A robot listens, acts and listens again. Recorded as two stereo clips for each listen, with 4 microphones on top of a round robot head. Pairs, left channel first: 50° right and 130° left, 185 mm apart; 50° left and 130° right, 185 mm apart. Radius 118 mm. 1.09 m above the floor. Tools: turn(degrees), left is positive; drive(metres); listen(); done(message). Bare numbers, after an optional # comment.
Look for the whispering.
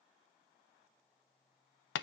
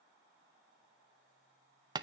listen()
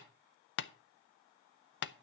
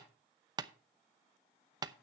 listen()
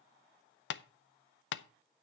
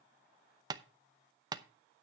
done("I can't make out whispering, only tapping.")